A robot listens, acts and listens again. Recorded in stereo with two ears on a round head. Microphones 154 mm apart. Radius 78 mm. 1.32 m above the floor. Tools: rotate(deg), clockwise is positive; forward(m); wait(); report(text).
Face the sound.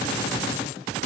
wait()
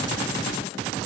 wait()
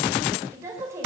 rotate(15)
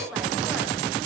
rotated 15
rotate(30)
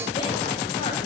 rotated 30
wait()
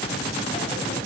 wait()
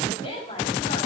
rotate(-30)
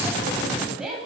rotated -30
report("Facing the woman speaking.")